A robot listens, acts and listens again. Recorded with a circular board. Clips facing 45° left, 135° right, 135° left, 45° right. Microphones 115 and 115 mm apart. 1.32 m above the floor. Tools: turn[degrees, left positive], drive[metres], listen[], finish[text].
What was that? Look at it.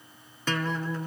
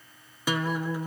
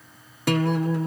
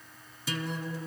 Thought: The guitar: 145° left.
Action: turn[145]
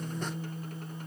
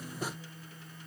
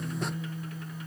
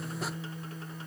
Thought: The guitar is now 10° left.
Action: turn[10]
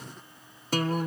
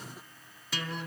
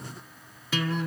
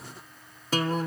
Action: finish[Found it: a guitar, straight ahead.]